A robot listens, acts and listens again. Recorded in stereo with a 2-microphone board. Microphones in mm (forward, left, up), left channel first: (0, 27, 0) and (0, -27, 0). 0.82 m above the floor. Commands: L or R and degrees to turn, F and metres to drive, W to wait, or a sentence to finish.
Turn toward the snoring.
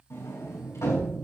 W
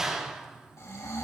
L65
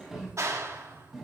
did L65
W
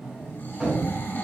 L40
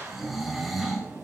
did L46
Found it: snoring, straight ahead, 2 to 4 m away.